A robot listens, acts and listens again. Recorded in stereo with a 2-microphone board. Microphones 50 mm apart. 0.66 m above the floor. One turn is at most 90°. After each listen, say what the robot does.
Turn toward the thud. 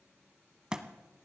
Turn 15° right.
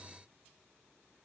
Keep listening.
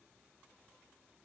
I heard a thud, but can't make it out now. It was about straight ahead or 150° right.